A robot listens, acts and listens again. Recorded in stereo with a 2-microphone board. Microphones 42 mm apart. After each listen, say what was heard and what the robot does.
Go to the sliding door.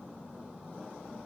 Keep listening.
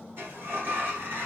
The sliding door: about 55° right or 125° right. Turn 55° right.
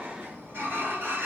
So it is at 70° right. Turn 70° right.
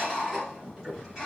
The sliding door is now 10° right. Turn 10° right.
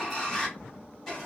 Drive 1.0 m forward.
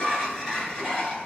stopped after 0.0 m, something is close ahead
Something is in my way. I am facing the sliding door but have not reached it.